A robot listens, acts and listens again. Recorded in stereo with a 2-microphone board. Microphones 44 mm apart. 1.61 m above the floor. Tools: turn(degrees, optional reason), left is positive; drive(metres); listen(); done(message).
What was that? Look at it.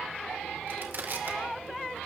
turn(degrees=-60, reason="The crushing: about 60° right or 120° right.")
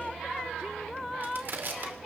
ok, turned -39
turn(degrees=-65, reason="So it is at 65° right.")
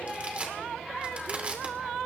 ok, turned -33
turn(degrees=-35, reason="The crushing is now 35° right.")
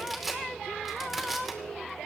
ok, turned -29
done("Found it: crushing, straight ahead, 2 to 4 m away.")